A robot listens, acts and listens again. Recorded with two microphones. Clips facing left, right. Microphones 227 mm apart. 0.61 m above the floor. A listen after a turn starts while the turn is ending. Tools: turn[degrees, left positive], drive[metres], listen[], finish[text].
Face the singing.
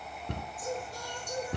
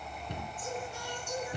Thought: The singing: about 35° left or 145° left.
Action: turn[35]
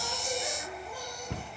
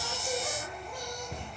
Action: listen[]
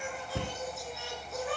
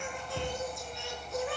Action: finish[Facing the singing.]